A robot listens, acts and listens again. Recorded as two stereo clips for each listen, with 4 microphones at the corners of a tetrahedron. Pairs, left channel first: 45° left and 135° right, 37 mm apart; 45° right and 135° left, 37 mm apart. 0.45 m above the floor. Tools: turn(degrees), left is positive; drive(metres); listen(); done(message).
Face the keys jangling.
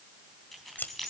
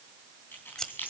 turn(degrees=-35)
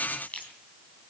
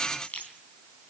done("Facing the keys jangling, 2 to 4 m away.")